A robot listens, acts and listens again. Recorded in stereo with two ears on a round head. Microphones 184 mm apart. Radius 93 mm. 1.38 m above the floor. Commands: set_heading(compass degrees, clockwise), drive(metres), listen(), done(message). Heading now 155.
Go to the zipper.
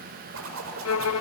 set_heading(230)
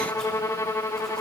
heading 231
listen()
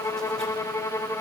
listen()
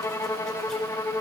done("I heard a zipper, but can't make it out now. It was about 5° left or 30° right. I did not reach it.")